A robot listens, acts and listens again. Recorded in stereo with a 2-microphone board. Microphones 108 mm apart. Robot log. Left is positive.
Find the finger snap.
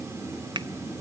note: The finger snap: about 45° right or 135° right.
cmd yaw -45
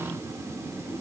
cmd idle
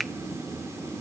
end: Found it: a finger snap, straight ahead.